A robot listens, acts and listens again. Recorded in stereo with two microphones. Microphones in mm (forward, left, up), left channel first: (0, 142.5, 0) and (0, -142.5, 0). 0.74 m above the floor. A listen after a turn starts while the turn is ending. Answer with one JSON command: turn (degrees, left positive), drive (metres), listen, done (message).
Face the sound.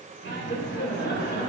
{"turn": 35}
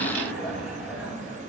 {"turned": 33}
{"done": "Facing the laughter, over 4 m away."}